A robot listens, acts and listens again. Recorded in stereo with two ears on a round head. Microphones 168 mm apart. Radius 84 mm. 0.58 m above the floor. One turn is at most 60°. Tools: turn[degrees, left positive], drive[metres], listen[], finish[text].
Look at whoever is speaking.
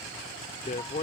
Thought: The man speaking: about 40° left or 140° left.
Action: turn[40]
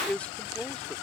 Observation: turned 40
Thought: So it is at 10° left.
Action: turn[10]
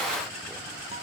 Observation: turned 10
Action: listen[]
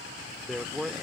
Action: finish[Facing the man speaking.]